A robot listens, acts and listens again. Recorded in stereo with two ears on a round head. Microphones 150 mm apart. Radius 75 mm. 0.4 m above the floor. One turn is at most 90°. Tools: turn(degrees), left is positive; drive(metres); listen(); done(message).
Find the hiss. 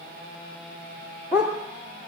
listen()
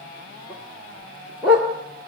listen()
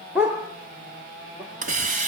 turn(degrees=-45)
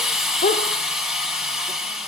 done("Found it: a hiss, straight ahead.")